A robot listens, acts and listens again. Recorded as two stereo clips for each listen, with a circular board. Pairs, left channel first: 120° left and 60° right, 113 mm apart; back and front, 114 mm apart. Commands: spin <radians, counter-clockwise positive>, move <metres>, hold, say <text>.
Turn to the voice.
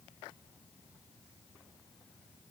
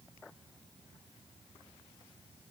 hold
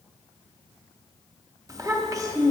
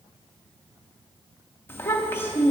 spin -2.01
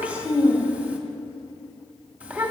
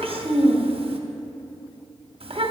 spin 0.26
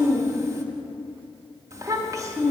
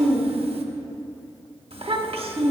say Found it: a child speaking, straight ahead.